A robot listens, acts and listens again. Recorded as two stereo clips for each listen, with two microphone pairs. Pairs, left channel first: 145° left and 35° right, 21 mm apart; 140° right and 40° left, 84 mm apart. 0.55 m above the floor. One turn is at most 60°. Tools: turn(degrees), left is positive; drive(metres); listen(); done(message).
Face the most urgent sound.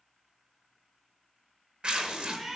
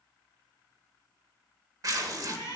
listen()
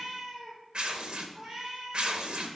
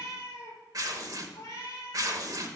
listen()
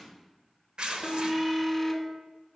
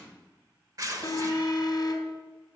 turn(degrees=-60)
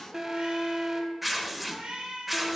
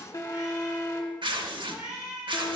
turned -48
turn(degrees=-60)
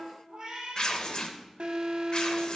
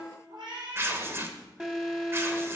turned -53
turn(degrees=-40)
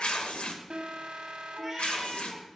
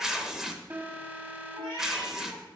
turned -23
turn(degrees=-15)
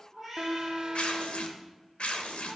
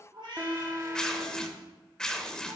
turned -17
done("Found it: an alarm, straight ahead.")